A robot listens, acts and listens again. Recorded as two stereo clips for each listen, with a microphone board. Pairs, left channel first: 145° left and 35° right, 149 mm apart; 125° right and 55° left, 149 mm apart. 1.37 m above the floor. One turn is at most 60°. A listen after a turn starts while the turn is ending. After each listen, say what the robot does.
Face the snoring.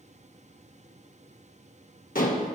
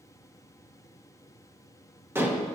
Keep listening.
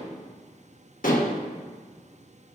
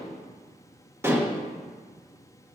Keep listening.
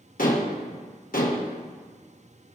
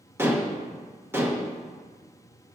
I can't make out snoring, only dishes clattering.